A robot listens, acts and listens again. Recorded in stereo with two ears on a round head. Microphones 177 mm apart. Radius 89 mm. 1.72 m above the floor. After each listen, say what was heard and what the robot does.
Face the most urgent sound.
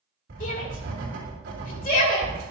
The shout: about 45° left or 135° left. Turn 45° left.
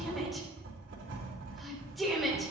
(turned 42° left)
Facing the shout, 2 to 4 m away.